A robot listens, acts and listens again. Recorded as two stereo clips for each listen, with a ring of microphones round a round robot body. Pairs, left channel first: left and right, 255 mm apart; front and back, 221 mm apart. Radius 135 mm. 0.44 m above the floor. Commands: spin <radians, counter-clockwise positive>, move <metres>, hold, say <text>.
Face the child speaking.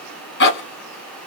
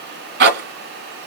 hold
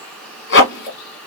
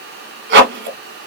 hold
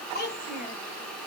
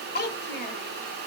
spin 0.70
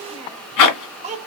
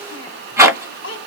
spin -0.52
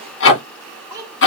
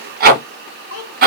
spin -0.26
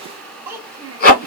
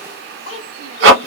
spin -0.17
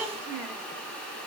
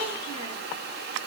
hold
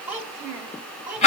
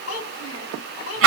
say Found it: a child speaking, straight ahead.